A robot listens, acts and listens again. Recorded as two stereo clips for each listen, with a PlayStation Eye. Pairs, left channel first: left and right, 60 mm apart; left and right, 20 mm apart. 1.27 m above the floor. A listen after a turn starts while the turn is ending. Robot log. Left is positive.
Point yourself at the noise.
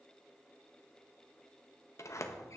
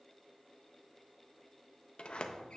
note: The sliding door: about 55° left or 125° left.
cmd yaw +55
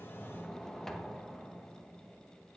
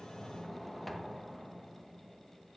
end: Found it: a sliding door, straight ahead, under 1 m away.